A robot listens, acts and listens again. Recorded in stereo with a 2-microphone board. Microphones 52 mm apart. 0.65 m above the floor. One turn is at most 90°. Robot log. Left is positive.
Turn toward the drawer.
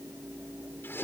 cmd idle
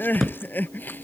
cmd yaw +30
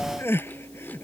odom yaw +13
cmd idle
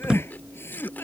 note: So it is at 15° right.
cmd yaw -15
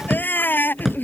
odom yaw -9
end: Facing the drawer.